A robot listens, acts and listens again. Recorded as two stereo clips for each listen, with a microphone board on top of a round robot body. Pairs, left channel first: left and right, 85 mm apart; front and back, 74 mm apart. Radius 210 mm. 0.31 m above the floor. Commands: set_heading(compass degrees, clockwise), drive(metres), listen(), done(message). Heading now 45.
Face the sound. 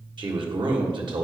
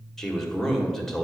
set_heading(130)
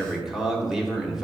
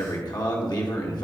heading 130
done("Facing the man speaking.")